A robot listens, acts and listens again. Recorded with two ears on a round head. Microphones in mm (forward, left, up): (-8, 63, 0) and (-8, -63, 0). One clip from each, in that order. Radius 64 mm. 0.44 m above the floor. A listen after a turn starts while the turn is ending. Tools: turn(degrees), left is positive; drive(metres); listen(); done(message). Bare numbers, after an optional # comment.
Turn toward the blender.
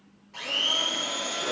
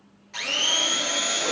# The blender: about 55° right or 125° right.
turn(-55)
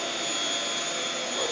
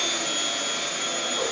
done("Facing the blender.")